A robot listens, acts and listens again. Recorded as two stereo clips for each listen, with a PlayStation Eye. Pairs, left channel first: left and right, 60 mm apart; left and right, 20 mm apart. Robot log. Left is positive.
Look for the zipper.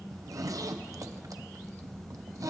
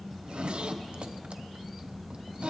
note: The zipper: about 75° right or 105° right.
cmd yaw -75
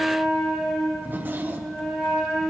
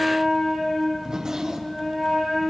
note: So it is at 35° right.
cmd yaw -35
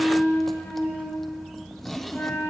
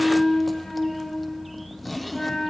end: Found it: a zipper, straight ahead, under 1 m away.